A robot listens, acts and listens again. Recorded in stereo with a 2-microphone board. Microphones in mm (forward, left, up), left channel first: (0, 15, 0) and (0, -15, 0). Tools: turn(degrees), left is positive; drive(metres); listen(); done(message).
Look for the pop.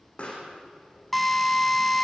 turn(degrees=40)
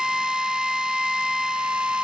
listen()
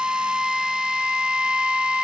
done("I heard a pop, but can't make it out now. It was about straight ahead or 100° left.")